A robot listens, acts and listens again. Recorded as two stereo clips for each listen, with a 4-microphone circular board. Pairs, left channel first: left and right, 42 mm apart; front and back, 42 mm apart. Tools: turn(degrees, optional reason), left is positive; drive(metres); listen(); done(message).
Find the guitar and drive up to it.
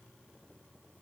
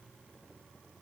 listen()
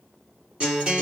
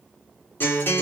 turn(degrees=-30, reason="The guitar: 30° right.")
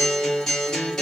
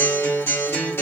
turn(degrees=10, reason="The guitar is now 10° left.")
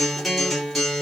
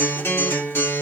drive(metres=1.0)
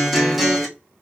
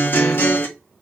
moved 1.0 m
drive(metres=1.0)
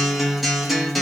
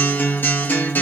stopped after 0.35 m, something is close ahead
done("I am next to the guitar.")